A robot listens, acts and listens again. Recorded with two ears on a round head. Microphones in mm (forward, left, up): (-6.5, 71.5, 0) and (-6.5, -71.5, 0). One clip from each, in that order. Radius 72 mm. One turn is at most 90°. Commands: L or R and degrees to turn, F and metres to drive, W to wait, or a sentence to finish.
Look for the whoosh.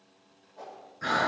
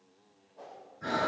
L30
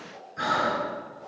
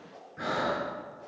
Found it: a whoosh, straight ahead.